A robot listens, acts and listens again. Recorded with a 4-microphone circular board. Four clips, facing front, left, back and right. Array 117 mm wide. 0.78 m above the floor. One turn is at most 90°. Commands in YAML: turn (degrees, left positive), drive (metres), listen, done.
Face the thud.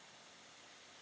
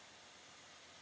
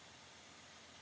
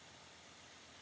listen: true
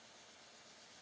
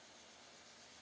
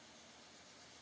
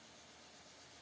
listen: true
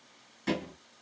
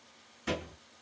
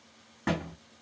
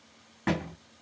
turn: -90
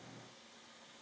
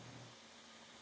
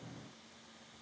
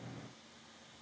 turn: -40
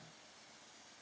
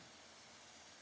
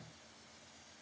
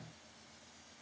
done: "I heard a thud from this way, but can't make it out now."